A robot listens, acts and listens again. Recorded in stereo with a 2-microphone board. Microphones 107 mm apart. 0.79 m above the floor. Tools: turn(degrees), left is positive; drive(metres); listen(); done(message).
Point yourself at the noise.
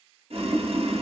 turn(degrees=-65)
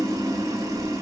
turn(degrees=-35)
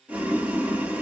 turn(degrees=-15)
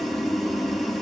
done("Found it: boiling, straight ahead, under 1 m away.")